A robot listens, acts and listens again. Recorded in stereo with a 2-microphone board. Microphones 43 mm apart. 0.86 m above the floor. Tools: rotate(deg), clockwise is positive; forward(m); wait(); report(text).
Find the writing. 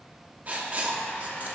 rotate(35)
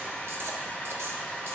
wait()
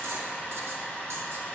wait()
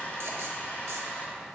report("I heard writing, but can't make it out now. It was about straight ahead or 110° right.")